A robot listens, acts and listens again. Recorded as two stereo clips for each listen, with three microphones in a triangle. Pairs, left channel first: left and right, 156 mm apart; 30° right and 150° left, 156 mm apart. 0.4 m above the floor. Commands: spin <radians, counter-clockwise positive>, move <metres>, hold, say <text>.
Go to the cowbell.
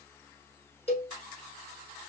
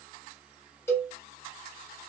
spin 0.79
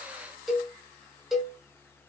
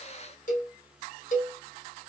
move 1.0
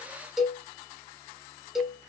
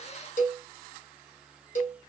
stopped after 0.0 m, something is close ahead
say Blocked. The cowbell is further on, straight ahead.